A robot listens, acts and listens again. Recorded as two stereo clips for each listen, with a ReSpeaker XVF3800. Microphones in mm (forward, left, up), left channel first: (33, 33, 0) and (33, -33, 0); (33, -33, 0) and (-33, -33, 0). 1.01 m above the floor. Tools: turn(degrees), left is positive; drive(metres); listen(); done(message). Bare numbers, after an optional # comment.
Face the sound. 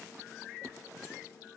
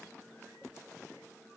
listen()
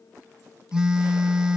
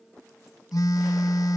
# The phone buzzing: 15° right.
turn(-15)
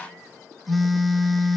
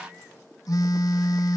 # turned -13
done("Facing the phone buzzing.")